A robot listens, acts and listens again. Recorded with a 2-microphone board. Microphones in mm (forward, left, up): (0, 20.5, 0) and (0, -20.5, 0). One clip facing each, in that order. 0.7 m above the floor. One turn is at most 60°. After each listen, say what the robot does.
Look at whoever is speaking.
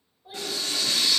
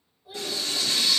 Turn 40° left.
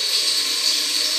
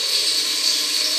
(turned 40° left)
Keep listening.
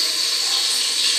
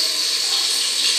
Keep listening.
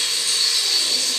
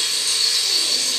I heard a child speaking, but can't make it out now. It was about straight ahead or 100° left.